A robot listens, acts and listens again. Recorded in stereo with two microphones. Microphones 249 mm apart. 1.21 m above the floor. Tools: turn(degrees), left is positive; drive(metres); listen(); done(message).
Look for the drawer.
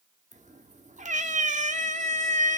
listen()
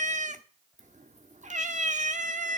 listen()
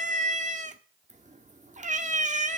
done("I can't make out a drawer to turn to.")